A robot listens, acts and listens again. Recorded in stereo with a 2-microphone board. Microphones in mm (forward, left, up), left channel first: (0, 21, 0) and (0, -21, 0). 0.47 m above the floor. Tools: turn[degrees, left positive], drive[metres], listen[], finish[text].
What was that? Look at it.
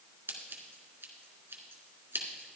Thought: The scissors: about 75° right or 105° right.
Action: turn[-75]
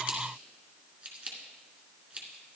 Thought: So it is at 30° right.
Action: turn[-30]
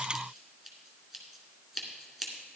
Action: finish[Found it: scissors, straight ahead.]